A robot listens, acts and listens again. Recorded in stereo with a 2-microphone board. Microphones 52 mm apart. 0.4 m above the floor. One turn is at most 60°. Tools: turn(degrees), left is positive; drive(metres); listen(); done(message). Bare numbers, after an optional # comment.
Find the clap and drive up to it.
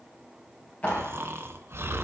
# The clap: about 30° left or 150° left.
turn(30)
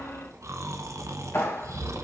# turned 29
# So it is at 115° left.
turn(60)
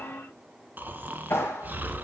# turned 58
# The clap is now 60° left.
turn(60)
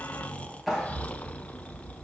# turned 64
drive(1.0)
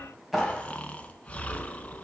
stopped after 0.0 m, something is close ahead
done("Something is in my way. I am facing the clap but have not reached it.")